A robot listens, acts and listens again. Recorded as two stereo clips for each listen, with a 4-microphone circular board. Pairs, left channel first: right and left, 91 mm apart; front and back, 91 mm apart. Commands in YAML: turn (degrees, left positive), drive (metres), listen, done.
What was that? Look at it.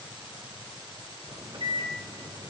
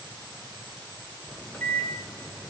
turn: 70
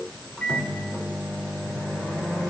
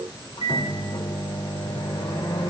turn: -10
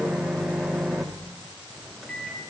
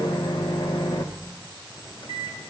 done: "Found it: a microwave, straight ahead, 1 to 2 m away."